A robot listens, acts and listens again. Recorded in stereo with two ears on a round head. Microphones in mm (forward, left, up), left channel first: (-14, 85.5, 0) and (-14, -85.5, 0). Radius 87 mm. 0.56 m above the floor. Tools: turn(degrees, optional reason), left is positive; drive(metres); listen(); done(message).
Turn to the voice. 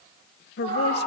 turn(degrees=60, reason="The woman speaking: about 60° left or 120° left.")
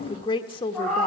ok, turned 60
turn(degrees=30, reason="So it is at 30° left.")
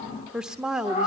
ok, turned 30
done("Facing the woman speaking, 1 to 2 m away.")